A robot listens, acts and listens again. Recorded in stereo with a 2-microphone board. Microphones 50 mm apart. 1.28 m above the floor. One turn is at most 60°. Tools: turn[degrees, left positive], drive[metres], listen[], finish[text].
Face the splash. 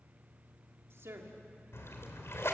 Thought: The splash: about 60° left or 120° left.
Action: turn[60]
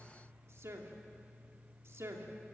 Action: listen[]
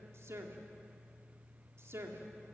Action: finish[I heard a splash, but can't make it out now. It was about straight ahead or 60° left.]